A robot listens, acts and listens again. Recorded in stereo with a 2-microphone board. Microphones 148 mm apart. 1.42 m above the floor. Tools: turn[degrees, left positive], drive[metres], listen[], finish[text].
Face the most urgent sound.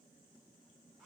Action: listen[]
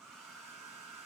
Action: listen[]
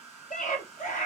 Thought: The scream: about 55° left or 125° left.
Action: turn[55]
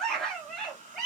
Action: finish[Facing the scream, 1 to 2 m away.]